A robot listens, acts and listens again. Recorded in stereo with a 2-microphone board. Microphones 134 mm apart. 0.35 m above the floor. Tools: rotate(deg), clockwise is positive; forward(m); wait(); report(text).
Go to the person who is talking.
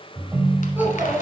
rotate(15)
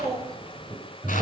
rotate(150)
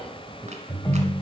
forward(1.0)
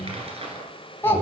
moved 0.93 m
rotate(-20)
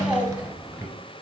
forward(1.0)
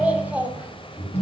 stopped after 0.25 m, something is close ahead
rotate(10)
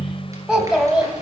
report("Arrived at the child speaking, straight ahead.")